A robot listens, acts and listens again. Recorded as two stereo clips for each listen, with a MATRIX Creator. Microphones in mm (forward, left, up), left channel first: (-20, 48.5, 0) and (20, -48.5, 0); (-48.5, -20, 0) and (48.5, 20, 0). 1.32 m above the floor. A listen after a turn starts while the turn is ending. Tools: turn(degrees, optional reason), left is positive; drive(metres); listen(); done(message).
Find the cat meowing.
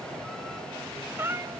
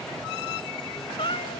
turn(degrees=-135, reason="The cat meowing: 135° right.")
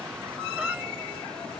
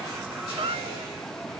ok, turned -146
turn(degrees=15, reason="Nothing new. It was at 15° left.")
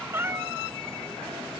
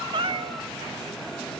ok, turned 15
done("Found it: a cat meowing, straight ahead.")